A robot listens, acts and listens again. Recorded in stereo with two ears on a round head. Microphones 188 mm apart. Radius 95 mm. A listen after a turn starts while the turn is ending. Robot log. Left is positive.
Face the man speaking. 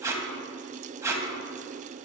cmd idle
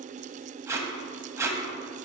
cmd idle
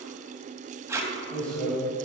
cmd yaw +30
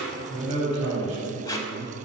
note: So it is at 35° right.
cmd yaw -35
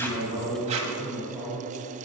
note: The man speaking is now 15° left.
cmd yaw +15
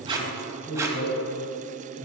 end: Found it: a man speaking, straight ahead.